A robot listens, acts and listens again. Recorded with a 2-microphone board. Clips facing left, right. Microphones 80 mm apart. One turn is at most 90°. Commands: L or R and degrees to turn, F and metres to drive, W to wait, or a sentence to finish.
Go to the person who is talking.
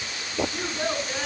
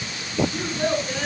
L30
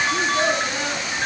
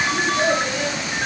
L90
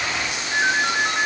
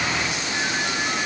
L45
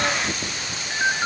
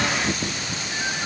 W
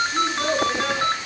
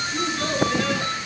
L15
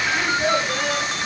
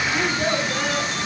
F1.0
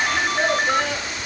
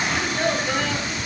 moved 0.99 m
F1.0
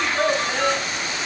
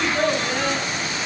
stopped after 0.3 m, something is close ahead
Something is in my way. I am facing the child speaking but have not reached it.